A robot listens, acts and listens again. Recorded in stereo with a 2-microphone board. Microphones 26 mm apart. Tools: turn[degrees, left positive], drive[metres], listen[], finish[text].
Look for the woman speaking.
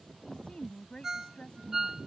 Thought: The woman speaking: about 40° left or 140° left.
Action: turn[40]
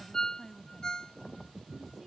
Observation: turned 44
Action: finish[Found it: a woman speaking, straight ahead.]